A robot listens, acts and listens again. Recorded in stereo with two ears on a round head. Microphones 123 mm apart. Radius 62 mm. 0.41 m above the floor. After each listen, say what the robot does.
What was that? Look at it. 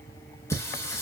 Turn 20° left.
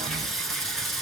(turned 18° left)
Found it: singing, straight ahead.